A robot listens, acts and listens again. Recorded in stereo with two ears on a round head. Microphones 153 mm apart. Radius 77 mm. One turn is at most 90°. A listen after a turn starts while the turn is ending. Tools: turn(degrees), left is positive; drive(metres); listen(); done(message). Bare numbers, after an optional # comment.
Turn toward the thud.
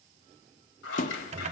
# The thud: about 50° left or 130° left.
turn(50)
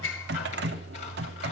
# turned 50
listen()
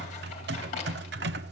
done("I heard a thud, but can't make it out now. It was about straight ahead or 80° left.")